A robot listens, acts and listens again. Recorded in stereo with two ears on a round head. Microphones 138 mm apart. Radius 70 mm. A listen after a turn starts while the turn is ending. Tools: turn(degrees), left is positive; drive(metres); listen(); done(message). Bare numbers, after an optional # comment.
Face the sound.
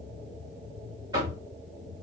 # The knocking: about 25° right or 155° right.
turn(-25)
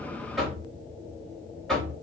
done("Facing the knocking, 1 to 2 m away.")